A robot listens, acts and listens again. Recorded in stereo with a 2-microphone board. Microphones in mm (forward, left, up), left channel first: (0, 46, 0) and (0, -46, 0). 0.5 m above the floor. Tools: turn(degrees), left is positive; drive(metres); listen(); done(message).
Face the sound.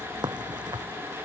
turn(degrees=-50)
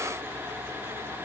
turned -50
listen()
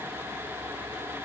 done("I heard a crack, but can't make it out now. It was about straight ahead or 80° right.")